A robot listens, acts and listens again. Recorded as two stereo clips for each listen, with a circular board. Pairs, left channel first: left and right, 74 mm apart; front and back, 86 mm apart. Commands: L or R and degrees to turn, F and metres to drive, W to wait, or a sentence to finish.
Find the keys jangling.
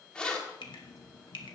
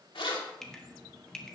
L10
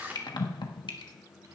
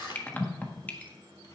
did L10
R25
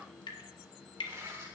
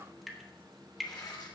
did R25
R35
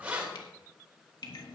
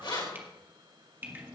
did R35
R20
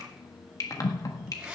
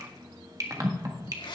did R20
R10
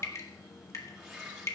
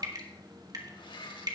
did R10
Facing the keys jangling, 2 to 4 m away.